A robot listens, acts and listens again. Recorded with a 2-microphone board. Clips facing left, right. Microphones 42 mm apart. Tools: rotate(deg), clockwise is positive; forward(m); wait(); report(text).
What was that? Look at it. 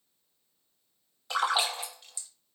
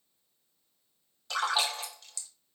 rotate(-20)
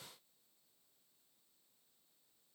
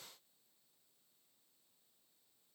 wait()
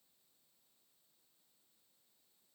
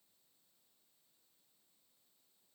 report("I heard a splash, but can't make it out now. It was about straight ahead or 140° left.")